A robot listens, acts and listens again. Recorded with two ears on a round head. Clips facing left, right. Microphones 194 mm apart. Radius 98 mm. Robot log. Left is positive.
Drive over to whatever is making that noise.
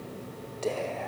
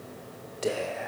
cmd yaw -30
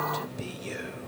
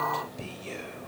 note: So it is at 20° left.
cmd yaw +20
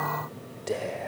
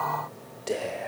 cmd fwd 1.0
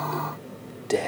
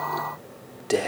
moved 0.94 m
cmd fwd 1.0
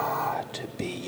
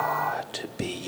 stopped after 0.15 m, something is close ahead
end: Arrived at the whispering, straight ahead.